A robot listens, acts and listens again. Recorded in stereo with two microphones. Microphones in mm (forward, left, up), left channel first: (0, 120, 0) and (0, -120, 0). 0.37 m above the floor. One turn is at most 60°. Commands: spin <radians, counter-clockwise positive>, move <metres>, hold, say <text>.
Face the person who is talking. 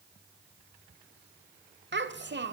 spin -0.96
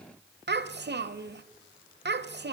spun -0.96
spin -1.05
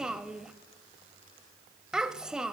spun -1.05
say Found it: a child speaking, straight ahead, under 1 m away.